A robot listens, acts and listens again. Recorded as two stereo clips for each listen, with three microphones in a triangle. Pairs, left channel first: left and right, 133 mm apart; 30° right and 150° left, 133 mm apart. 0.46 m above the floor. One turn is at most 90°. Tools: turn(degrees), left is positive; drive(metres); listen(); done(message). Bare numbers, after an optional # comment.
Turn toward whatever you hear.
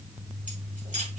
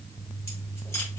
# The keys jangling: 100° right.
turn(-90)
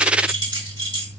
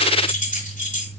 # The keys jangling is now 35° right.
turn(-35)
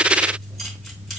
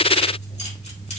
listen()
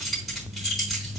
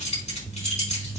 done("Found it: keys jangling, straight ahead.")